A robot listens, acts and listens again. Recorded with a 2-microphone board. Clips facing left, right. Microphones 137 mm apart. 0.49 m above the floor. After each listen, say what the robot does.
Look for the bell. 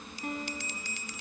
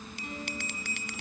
Turn 70° right.
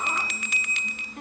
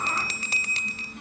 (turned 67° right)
Turn 35° right.
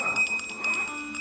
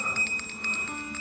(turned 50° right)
Turn 15° left.
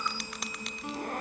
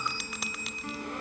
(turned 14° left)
Found it: a bell, straight ahead, under 1 m away.